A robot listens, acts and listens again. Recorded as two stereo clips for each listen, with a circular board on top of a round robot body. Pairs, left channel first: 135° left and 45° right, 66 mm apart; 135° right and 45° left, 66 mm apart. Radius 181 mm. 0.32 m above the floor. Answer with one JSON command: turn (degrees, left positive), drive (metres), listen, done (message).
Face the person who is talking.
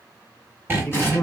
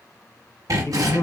{"turn": -165}
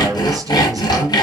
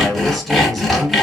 {"turn": -40}
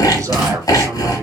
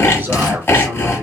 {"turn": -10}
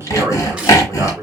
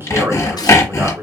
{"done": "Found it: a man speaking, straight ahead, 2 to 4 m away."}